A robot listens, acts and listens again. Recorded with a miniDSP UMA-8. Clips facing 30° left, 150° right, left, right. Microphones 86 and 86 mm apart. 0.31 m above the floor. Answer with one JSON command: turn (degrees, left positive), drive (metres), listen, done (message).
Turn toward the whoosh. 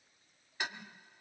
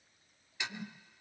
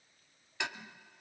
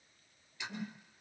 {"turn": -95}
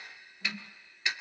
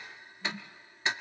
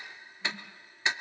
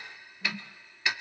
{"turn": -15}
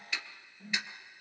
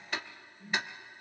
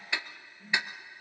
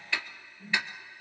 {"done": "Facing the whoosh."}